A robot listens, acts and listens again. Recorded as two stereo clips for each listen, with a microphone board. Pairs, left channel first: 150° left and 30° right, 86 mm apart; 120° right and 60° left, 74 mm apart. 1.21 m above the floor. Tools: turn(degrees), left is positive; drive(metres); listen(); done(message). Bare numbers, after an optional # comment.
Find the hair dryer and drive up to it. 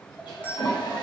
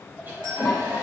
# The hair dryer: 125° left.
turn(125)
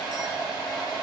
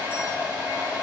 # The hair dryer is now 10° right.
turn(-10)
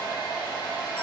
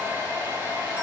drive(1.0)
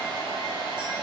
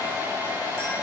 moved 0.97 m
drive(1.0)
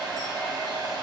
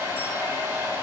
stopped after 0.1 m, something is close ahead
done("Blocked. The hair dryer is further on, straight ahead.")